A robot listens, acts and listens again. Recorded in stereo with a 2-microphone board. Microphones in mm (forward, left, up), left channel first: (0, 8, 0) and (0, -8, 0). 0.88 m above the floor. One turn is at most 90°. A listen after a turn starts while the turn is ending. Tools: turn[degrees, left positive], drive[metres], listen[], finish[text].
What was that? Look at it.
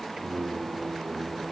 Thought: The singing: about 65° right or 115° right.
Action: turn[-65]
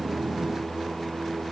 Thought: So it is at 35° right.
Action: turn[-35]
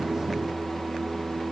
Thought: The singing is now 20° left.
Action: turn[20]
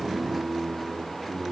Action: finish[Facing the singing, over 4 m away.]